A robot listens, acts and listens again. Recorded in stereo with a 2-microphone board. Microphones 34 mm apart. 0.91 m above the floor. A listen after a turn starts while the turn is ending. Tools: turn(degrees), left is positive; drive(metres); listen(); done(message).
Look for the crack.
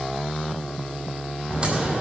turn(degrees=-30)
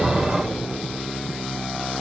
listen()
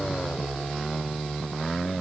done("I heard a crack, but can't make it out now. It was about straight ahead or 120° right.")